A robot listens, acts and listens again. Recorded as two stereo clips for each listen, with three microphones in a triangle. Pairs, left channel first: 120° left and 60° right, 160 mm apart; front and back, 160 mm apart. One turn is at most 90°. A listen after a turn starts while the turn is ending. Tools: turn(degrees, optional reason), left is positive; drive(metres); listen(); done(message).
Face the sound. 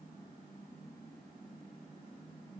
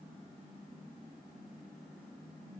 listen()
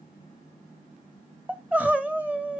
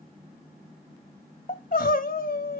turn(degrees=20, reason="The crying: 20° left.")
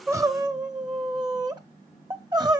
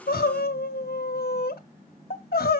done("Found it: crying, straight ahead, under 1 m away.")